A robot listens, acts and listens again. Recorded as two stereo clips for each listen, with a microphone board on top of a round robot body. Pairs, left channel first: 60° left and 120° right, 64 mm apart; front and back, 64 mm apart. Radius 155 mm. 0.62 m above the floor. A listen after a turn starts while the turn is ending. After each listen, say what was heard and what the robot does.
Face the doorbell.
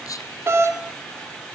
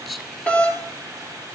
The doorbell: 65° right. Turn 65° right.
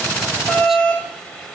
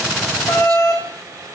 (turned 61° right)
Facing the doorbell.